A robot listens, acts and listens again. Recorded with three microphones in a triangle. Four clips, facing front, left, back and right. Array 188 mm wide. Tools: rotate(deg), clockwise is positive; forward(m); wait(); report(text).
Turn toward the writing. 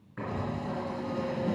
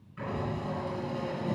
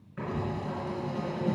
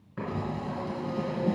rotate(85)
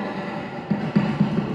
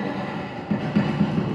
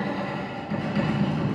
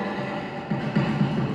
rotate(-25)
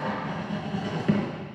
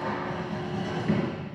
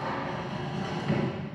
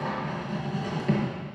report("Found it: writing, straight ahead.")